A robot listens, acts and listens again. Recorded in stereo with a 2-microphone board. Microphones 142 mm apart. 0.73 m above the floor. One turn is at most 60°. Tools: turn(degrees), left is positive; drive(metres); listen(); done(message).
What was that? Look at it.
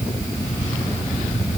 listen()
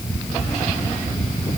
listen()
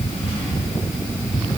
done("I can't make out anything.")